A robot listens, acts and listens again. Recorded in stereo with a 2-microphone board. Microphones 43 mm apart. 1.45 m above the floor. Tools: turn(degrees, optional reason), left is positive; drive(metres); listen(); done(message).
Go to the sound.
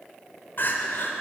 turn(degrees=60, reason="The crying: about 60° left or 120° left.")
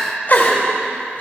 turn(degrees=50, reason="So it is at 50° left.")
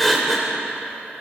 drive(metres=1.0)
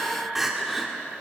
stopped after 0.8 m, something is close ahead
turn(degrees=-10, reason="The crying is now 10° right.")
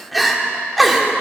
done("I am next to the crying.")